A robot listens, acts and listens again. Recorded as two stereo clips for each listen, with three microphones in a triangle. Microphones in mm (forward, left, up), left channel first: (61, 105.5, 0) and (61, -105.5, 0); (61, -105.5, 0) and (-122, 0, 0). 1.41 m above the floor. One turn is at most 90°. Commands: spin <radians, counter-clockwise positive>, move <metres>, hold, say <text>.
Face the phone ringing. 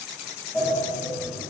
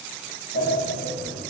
hold
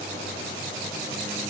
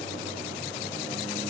hold
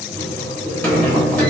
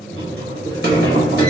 say I can't make out a phone ringing, only a sliding door.